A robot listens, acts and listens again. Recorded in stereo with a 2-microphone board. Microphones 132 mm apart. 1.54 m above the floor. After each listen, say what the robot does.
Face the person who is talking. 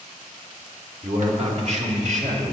Turn 65° right.
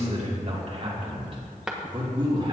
Turn 35° right.
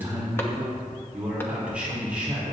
Turn 10° right.
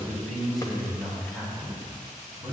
Found it: a man speaking, straight ahead, over 4 m away.